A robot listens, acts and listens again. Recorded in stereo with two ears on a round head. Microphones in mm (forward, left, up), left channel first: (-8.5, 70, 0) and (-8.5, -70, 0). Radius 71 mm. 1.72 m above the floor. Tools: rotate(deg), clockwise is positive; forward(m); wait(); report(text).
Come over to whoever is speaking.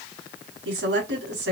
rotate(90)
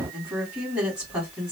forward(1.0)
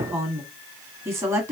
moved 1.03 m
rotate(15)
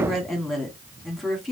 forward(1.0)
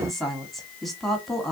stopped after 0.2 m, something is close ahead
report("I am next to the woman speaking.")